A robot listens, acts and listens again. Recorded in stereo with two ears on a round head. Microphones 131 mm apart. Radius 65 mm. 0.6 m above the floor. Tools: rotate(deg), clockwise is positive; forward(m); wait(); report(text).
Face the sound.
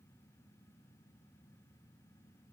wait()
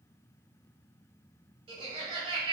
rotate(45)
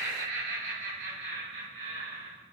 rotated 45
rotate(100)
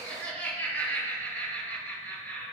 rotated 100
rotate(-15)
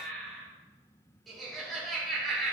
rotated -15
report("Found it: laughter, straight ahead, over 4 m away.")